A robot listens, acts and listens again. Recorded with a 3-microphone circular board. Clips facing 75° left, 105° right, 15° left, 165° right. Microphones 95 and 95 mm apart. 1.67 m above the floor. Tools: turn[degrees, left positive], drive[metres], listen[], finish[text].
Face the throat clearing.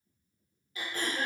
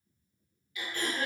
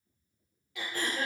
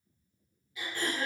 Thought: The throat clearing: 20° left.
Action: turn[20]
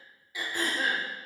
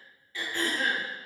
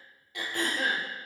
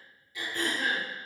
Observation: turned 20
Action: finish[Found it: throat clearing, straight ahead, under 1 m away.]